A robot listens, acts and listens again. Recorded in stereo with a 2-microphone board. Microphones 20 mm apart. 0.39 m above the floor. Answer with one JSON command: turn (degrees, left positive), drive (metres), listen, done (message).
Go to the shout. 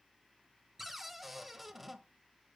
{"listen": true}
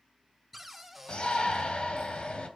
{"turn": 55}
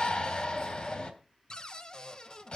{"turn": 55}
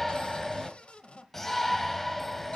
{"turn": 10}
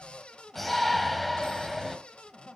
{"drive": 1.0}
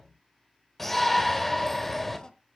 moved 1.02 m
{"turn": 10}
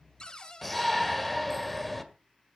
{"drive": 1.0}
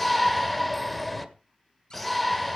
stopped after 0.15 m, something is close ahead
{"done": "Arrived at the shout, straight ahead."}